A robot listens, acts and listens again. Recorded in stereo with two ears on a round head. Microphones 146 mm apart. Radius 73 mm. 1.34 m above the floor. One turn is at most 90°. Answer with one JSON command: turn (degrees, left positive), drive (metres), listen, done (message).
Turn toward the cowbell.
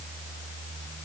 {"listen": true}
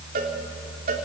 {"turn": -55}
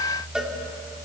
{"done": "Facing the cowbell."}